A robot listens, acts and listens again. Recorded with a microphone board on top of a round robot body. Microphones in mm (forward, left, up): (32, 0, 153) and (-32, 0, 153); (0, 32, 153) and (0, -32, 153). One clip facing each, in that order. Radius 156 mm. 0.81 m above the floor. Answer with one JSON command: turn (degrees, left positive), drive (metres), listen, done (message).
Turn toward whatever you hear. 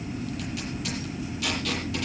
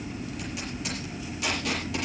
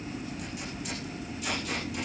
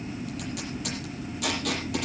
{"turn": -110}
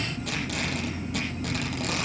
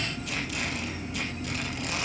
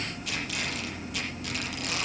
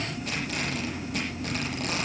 {"turn": -35}
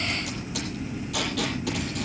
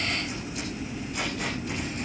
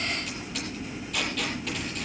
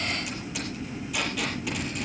{"done": "Facing the tape being pulled."}